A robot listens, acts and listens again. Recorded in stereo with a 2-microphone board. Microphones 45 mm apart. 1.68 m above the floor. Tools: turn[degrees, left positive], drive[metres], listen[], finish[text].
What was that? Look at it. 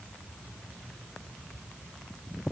Action: listen[]
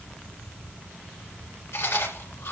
Thought: The chewing: about 70° left or 110° left.
Action: turn[70]
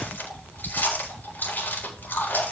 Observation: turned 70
Thought: So it is at 45° left.
Action: turn[45]
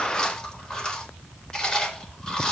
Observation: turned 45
Thought: The chewing is now 15° left.
Action: turn[15]
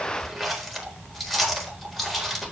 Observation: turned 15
Action: finish[Facing the chewing.]